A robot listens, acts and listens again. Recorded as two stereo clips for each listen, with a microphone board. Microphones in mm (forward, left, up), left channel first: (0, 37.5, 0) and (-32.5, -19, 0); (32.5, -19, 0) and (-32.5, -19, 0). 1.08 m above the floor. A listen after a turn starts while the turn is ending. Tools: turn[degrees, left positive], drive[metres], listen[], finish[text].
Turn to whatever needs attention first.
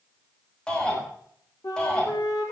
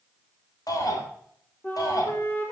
Thought: The shout: 15° right.
Action: turn[-15]
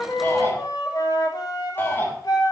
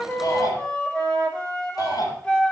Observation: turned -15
Action: finish[Found it: a shout, straight ahead.]